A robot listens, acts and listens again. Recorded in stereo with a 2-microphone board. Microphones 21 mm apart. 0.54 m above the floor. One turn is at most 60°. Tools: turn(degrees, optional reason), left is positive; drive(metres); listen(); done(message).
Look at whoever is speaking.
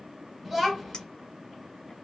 turn(degrees=30)
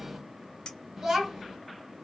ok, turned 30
turn(degrees=-30, reason="So it is at 30° right.")
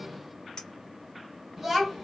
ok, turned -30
done("Found it: a child speaking, straight ahead.")